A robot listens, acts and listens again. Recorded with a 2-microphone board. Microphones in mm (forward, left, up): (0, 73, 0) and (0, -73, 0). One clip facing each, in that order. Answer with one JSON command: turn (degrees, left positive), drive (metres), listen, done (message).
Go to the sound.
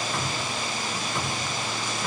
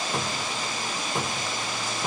{"turn": -25}
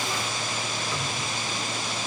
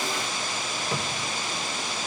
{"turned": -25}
{"turn": -130}
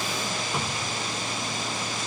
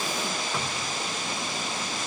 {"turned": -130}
{"turn": 10}
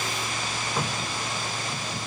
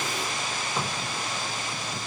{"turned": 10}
{"drive": 1.0}
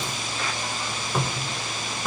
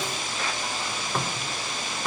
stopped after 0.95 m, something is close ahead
{"done": "I am next to the cupboard door."}